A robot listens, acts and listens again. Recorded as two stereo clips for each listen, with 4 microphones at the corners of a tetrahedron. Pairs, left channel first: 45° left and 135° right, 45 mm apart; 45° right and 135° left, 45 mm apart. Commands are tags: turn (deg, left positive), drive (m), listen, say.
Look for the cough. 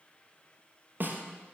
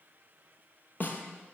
<listen/>
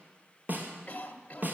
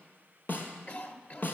<say>Found it: a cough, straight ahead.</say>